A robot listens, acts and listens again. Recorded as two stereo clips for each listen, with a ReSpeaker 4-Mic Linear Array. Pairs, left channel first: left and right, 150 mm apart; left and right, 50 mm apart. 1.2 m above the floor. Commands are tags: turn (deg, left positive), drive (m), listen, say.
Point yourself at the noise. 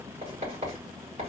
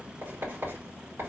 <turn deg="-55"/>
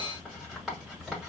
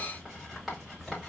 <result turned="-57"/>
<say>Found it: writing, straight ahead.</say>